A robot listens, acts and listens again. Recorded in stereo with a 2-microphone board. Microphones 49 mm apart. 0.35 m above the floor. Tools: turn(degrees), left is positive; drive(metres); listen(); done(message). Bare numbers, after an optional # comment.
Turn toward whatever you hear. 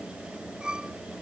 # The violin: about 20° right or 160° right.
turn(-20)
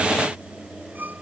# So it is at 145° right.
turn(-145)
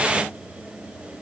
listen()
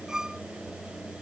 # The violin is now 15° right.
turn(-15)
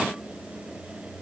listen()
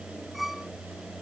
done("Found it: a violin, straight ahead.")